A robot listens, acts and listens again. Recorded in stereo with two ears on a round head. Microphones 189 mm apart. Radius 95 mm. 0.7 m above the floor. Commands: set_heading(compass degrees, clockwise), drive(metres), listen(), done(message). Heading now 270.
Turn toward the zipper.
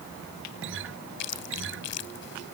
listen()
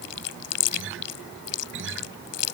listen()
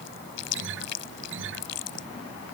done("I can't make out a zipper to turn to.")